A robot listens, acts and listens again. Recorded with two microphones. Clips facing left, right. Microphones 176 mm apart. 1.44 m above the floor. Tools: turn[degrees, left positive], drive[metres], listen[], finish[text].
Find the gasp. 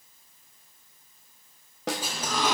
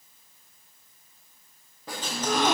Thought: The gasp: about 60° right or 120° right.
Action: turn[-60]
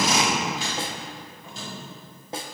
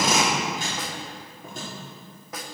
Action: listen[]
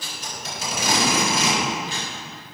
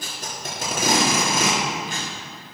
Action: finish[I heard a gasp, but can't make it out now. It was about straight ahead or 60° right.]